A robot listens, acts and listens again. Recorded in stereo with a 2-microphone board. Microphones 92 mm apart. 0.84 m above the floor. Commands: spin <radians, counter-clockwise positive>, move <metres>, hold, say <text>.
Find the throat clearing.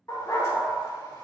hold
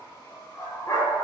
hold
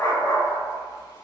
say I can't make out throat clearing, only a dog barking.